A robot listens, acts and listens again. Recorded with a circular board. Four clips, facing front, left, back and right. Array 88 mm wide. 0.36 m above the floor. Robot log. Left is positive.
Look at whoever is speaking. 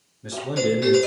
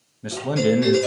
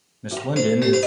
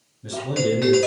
note: The man speaking: 130° left.
cmd yaw +130
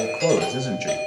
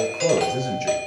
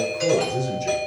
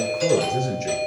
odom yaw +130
note: The man speaking is now 15° left.
cmd yaw +15
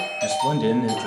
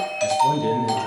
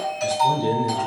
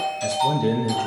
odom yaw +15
end: Found it: a man speaking, straight ahead.